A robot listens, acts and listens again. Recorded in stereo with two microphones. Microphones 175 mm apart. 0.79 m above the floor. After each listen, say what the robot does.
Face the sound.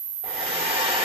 Turn 35° right.
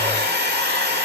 Turn 110° right.
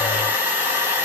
Turn 10° right.
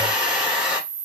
Found it: a hair dryer, straight ahead.